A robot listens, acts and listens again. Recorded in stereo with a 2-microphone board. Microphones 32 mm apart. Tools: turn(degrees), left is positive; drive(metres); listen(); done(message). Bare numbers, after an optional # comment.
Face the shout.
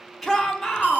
turn(30)
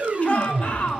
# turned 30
# So it is at 145° left.
turn(145)
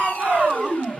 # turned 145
# The shout is now 10° right.
turn(-10)
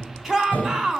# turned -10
done("Found it: a shout, straight ahead.")